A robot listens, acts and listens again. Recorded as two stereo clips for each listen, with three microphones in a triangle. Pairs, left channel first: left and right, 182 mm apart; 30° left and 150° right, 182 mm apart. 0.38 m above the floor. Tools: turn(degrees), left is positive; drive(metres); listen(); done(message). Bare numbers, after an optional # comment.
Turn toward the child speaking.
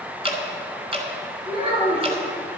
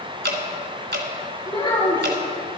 # The child speaking: 35° right.
turn(-35)
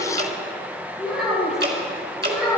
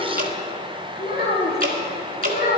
done("Found it: a child speaking, straight ahead.")